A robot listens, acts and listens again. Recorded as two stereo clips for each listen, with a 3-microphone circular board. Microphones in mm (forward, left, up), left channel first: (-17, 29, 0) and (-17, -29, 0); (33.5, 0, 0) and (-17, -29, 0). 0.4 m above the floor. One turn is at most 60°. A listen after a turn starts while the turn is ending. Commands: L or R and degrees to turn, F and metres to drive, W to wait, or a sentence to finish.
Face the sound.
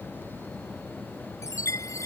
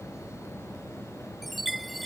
L60
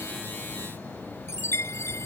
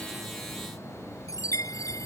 L50
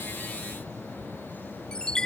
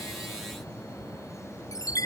L15
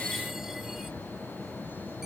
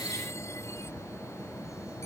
W
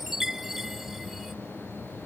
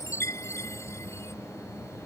Facing the chime.